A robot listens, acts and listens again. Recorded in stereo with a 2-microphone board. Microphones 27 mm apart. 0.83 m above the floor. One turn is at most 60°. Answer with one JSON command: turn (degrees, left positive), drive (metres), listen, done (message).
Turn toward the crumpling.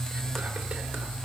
{"listen": true}
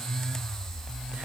{"listen": true}
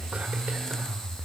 {"done": "I can't make out crumpling."}